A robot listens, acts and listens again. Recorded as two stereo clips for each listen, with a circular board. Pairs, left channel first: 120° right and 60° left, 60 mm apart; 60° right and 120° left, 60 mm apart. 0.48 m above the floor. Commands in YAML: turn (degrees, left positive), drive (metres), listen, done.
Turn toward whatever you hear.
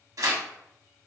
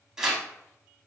turn: 40
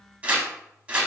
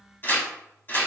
done: "Facing the tearing paper, under 1 m away."